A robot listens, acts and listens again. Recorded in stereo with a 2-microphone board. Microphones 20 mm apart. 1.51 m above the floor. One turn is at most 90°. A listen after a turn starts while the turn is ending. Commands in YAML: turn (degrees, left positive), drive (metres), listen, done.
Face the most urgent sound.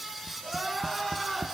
turn: 30
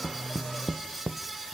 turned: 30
listen: true
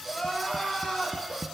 turn: 90
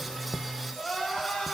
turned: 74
turn: 45
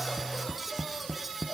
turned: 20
turn: 25
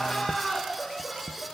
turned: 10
turn: 15
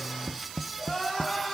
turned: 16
done: "Facing the crying."